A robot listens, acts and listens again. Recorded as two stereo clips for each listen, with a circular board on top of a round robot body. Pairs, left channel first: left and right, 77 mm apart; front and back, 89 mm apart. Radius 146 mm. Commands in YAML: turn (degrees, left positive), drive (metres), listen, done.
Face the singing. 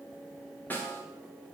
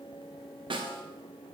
listen: true
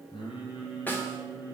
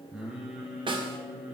turn: 105
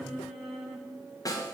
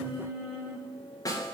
done: "Found it: singing, straight ahead."